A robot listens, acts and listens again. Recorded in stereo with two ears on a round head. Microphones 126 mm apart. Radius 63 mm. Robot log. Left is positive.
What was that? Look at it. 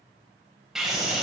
cmd yaw -30
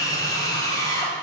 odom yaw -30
note: So it is at 25° left.
cmd yaw +25
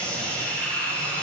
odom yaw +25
note: The scream is now 10° left.
cmd yaw +10
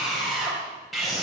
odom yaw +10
end: Found it: a scream, straight ahead.